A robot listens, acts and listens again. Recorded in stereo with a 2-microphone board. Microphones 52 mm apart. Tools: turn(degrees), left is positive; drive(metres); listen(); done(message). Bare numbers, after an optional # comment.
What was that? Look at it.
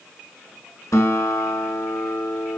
turn(90)
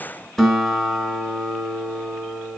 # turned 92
done("Found it: a guitar, straight ahead, 1 to 2 m away.")